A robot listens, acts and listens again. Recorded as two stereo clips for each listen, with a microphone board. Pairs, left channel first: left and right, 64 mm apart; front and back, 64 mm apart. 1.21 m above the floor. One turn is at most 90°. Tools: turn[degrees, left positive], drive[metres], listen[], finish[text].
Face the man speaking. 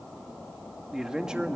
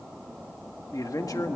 Thought: The man speaking: 15° right.
Action: turn[-15]
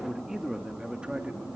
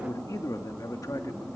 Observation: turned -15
Thought: The man speaking is now 20° right.
Action: turn[-20]
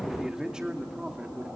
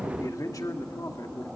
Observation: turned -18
Thought: The man speaking is now 20° right.
Action: turn[-20]
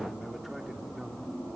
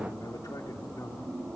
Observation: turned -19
Action: listen[]
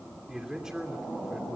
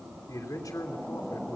Thought: The man speaking is now 10° right.
Action: turn[-10]
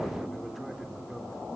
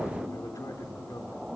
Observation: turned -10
Action: finish[Facing the man speaking, 2 to 4 m away.]